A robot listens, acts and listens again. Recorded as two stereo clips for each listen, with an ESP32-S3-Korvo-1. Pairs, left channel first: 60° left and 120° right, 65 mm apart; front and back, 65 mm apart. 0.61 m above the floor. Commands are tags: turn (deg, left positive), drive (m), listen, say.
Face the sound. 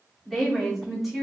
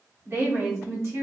<turn deg="155"/>
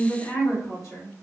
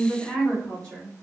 <turn deg="70"/>
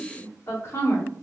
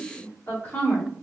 <turn deg="45"/>
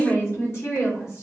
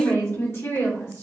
<turn deg="30"/>
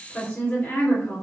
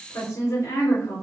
<say>Facing the woman speaking, 1 to 2 m away.</say>